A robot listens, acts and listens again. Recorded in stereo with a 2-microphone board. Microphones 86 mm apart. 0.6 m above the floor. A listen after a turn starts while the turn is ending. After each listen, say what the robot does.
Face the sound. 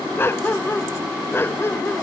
Turn 25° left.
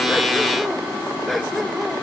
Facing the dog barking.